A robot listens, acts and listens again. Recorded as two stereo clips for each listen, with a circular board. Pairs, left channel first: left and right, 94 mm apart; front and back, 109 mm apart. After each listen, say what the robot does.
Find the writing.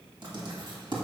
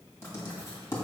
Turn 65° right.
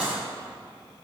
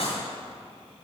Turn 15° right.
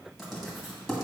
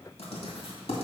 Facing the writing.